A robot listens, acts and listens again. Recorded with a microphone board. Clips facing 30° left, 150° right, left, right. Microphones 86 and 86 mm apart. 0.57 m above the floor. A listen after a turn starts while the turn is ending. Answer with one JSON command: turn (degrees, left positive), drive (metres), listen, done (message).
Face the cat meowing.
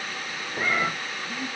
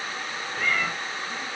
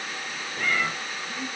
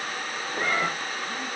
{"turn": -35}
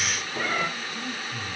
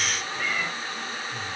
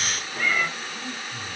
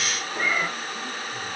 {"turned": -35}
{"turn": -20}
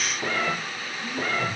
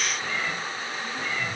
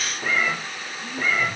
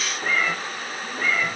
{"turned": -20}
{"done": "Found it: a cat meowing, straight ahead, under 1 m away."}